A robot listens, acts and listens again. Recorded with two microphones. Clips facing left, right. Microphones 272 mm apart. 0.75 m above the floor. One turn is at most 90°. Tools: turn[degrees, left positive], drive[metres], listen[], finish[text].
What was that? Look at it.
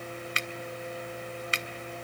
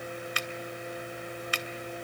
Thought: The finger snap: about 25° left or 155° left.
Action: turn[25]
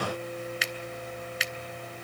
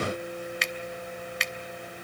Action: finish[Found it: a finger snap, straight ahead.]